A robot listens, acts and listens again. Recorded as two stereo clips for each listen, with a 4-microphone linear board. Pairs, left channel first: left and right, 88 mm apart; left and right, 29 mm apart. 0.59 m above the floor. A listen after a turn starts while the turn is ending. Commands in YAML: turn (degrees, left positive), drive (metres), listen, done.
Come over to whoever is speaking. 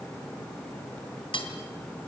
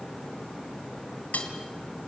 listen: true
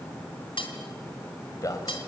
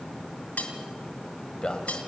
turn: 40
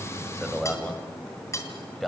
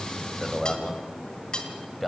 drive: 1.0
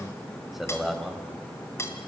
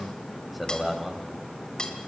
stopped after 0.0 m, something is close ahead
done: "Something is in my way. I am facing the man speaking but have not reached it."